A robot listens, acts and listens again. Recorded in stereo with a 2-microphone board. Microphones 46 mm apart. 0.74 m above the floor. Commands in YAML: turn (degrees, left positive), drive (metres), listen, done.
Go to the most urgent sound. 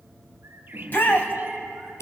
turn: 50
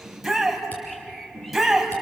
drive: 1.0
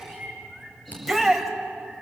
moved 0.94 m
drive: 1.0
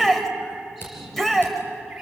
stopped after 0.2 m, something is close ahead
done: "Blocked. The shout is further on, straight ahead."